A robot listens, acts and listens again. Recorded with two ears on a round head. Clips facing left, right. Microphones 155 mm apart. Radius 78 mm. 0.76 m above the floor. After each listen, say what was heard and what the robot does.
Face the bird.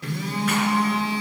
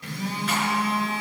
Keep listening.
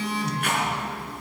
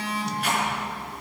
Keep listening.
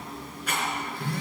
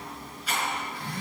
I can't make out a bird, only a rattle and a phone buzzing.